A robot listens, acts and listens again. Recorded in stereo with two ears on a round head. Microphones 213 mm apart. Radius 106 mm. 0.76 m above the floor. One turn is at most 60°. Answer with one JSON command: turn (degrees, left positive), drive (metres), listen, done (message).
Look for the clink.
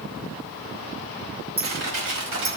{"turn": -25}
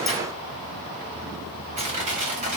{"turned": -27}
{"listen": true}
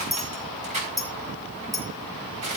{"done": "Facing the clink."}